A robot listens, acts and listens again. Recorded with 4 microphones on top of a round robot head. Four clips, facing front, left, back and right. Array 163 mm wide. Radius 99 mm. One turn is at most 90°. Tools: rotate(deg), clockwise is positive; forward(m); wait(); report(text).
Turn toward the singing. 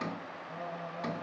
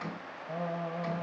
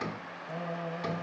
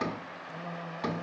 rotate(-90)
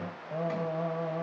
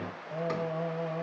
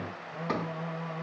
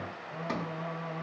rotate(-25)
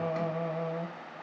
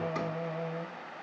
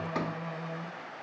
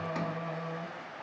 report("Facing the singing.")